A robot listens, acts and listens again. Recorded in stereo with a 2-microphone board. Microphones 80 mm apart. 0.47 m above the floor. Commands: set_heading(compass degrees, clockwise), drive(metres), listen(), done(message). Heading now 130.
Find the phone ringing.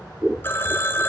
set_heading(100)
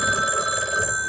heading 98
done("Found it: a phone ringing, straight ahead.")